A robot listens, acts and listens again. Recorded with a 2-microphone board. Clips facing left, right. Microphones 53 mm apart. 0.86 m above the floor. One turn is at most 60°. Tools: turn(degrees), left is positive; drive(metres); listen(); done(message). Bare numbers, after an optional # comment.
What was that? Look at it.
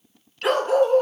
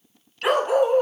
turn(-30)
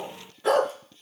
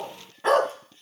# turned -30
# So it is at 140° right.
turn(-60)
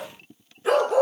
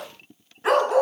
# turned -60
# The dog barking is now 80° right.
turn(-60)
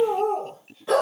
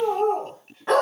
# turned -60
# The dog barking is now 55° right.
turn(-55)
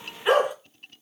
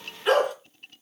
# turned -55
# The dog barking is now 10° left.
turn(10)
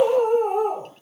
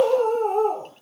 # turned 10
done("Found it: a dog barking, straight ahead, 2 to 4 m away.")